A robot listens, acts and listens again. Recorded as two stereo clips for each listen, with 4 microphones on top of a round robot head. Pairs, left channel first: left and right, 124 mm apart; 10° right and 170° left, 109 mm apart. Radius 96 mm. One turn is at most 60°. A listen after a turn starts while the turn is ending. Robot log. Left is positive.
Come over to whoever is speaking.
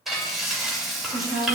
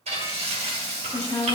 note: The woman speaking: 85° right.
cmd yaw -60
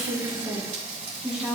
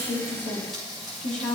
cmd fwd 1.0
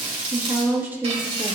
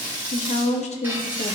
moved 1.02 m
note: The woman speaking is now 15° right.
cmd yaw -15
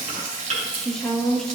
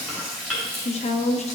cmd fwd 1.0
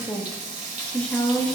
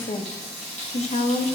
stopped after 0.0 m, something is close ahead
note: The woman speaking is now 10° left.
cmd yaw +10
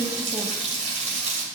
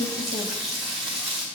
cmd idle
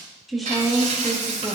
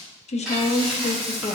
end: I am next to the woman speaking.